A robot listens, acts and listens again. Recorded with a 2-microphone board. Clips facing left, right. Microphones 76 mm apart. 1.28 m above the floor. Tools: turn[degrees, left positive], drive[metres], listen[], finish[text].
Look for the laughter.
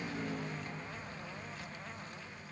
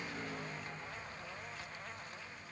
Action: listen[]
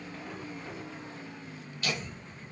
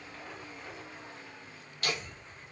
Thought: The laughter: about 60° right or 120° right.
Action: turn[-60]
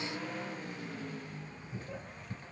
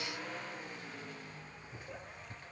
Thought: So it is at 10° right.
Action: turn[-10]
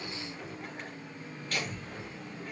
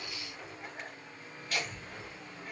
Action: finish[Facing the laughter.]